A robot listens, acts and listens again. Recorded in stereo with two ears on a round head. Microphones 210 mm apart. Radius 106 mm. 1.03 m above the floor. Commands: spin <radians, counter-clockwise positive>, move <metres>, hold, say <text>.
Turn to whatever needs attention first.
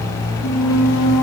hold
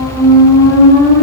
hold
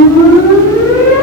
say I can't make out anything urgent to turn to.